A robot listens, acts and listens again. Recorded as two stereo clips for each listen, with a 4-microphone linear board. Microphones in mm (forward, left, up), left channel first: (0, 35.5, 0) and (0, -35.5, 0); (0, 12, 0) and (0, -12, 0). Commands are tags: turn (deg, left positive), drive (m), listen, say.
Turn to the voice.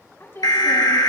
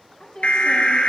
<turn deg="35"/>
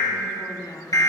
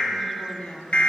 <turn deg="105"/>
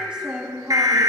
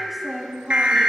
<turn deg="-15"/>
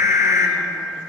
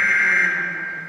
<listen/>
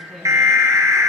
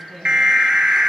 <say>Found it: a woman speaking, straight ahead, 2 to 4 m away.</say>